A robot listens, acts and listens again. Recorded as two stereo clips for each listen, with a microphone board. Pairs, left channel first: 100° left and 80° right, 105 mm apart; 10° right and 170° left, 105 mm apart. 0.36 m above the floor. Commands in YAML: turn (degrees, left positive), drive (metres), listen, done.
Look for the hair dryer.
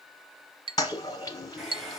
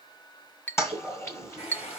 turn: 10
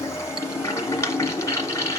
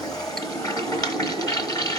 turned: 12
listen: true
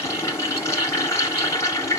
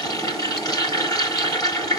listen: true
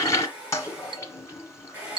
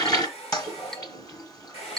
done: "Facing the hair dryer, 2 to 4 m away."